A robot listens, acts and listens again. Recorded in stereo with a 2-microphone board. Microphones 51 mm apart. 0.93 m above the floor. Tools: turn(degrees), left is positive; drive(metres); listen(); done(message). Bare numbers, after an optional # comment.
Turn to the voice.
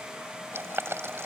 listen()
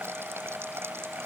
listen()
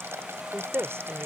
# The woman speaking: about 55° right or 125° right.
turn(-55)
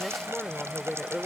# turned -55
done("Facing the woman speaking.")